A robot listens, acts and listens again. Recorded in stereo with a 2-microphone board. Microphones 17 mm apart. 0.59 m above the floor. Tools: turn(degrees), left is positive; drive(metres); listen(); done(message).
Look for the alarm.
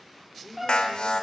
turn(degrees=65)
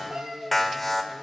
turn(degrees=10)
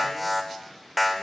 done("Facing the alarm, 1 to 2 m away.")